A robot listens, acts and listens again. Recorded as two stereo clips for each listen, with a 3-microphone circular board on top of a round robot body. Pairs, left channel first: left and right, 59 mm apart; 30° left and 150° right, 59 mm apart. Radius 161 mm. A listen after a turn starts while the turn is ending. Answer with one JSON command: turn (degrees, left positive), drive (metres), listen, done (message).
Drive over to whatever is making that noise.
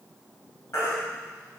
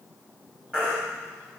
{"turn": 135}
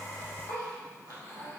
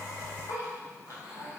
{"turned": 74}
{"turn": 60}
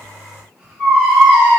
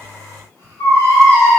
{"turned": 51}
{"turn": 10}
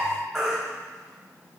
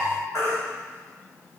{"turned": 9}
{"drive": 1.0}
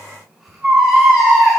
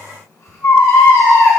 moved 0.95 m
{"drive": 1.0}
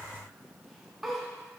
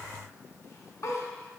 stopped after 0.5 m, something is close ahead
{"listen": true}
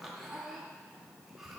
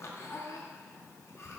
{"listen": true}
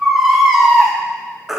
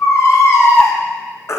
{"done": "I am next to the baby crying."}